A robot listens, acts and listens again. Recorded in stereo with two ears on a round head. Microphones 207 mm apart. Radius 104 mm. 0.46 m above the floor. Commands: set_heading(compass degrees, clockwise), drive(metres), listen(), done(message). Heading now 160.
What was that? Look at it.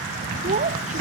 set_heading(190)
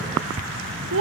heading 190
set_heading(310)
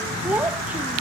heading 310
done("Facing the child speaking.")